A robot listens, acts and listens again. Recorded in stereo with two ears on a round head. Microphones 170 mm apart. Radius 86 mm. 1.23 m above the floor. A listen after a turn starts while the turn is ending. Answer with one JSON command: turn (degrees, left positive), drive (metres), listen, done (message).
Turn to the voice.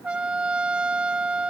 {"listen": true}
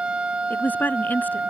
{"turn": 30}
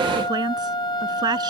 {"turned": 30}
{"turn": -20}
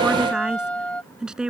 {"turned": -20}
{"done": "Found it: a woman speaking, straight ahead."}